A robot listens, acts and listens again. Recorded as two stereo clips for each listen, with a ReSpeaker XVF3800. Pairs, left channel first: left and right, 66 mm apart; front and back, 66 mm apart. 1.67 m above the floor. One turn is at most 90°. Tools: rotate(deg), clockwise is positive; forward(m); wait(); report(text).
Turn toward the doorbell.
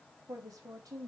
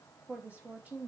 wait()
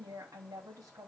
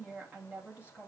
wait()
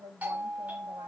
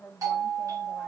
rotate(90)
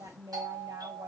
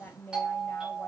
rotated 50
rotate(90)
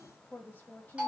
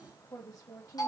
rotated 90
rotate(15)
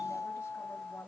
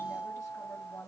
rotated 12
report("Facing the doorbell.")